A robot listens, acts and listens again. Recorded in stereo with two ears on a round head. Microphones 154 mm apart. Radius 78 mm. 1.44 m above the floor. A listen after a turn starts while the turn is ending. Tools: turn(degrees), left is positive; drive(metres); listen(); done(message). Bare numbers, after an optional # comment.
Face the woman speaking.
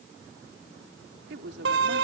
turn(-90)
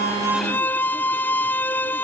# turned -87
listen()
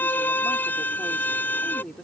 done("Found it: a woman speaking, straight ahead.")